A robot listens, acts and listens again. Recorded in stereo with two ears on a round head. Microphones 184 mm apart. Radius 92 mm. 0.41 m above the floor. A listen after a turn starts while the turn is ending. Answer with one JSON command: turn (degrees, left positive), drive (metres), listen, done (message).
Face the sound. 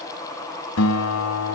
{"turn": 90}
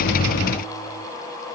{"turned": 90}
{"listen": true}
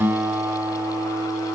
{"turn": -10}
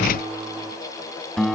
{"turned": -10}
{"done": "Found it: a guitar, straight ahead, 1 to 2 m away."}